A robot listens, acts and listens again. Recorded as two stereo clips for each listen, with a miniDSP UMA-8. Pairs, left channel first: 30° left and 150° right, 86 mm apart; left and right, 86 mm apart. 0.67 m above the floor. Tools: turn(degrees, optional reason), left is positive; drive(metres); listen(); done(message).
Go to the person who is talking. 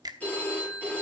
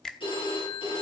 listen()
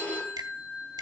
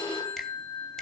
listen()
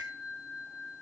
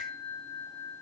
done("I can't make out anyone speaking, only a finger snap and a phone ringing.")